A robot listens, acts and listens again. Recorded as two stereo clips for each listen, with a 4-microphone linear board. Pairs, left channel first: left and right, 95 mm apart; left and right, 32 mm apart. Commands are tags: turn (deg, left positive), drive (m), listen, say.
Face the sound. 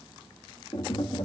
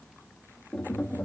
<turn deg="70"/>
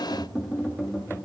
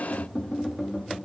<say>Found it: tapping, straight ahead, under 1 m away.</say>